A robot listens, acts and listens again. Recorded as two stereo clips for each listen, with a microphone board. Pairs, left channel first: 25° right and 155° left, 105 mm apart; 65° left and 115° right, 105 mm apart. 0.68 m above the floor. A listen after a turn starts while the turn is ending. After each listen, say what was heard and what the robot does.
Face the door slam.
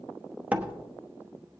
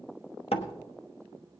The door slam: 85° left. Turn 85° left.
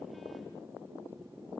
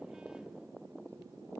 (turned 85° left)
I heard a door slam from this way, but can't make it out now.